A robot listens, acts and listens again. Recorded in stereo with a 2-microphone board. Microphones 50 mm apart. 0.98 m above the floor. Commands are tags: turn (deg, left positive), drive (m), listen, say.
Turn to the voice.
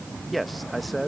<turn deg="30"/>
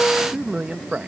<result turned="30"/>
<turn deg="-25"/>
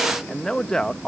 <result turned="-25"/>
<turn deg="15"/>
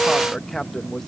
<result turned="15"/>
<say>Facing the man speaking.</say>